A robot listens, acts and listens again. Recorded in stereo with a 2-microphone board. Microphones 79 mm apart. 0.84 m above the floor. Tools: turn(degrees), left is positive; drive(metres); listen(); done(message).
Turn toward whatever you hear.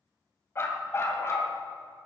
turn(degrees=35)
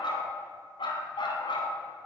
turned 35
turn(degrees=95)
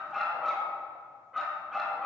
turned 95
done("Facing the dog barking, over 4 m away.")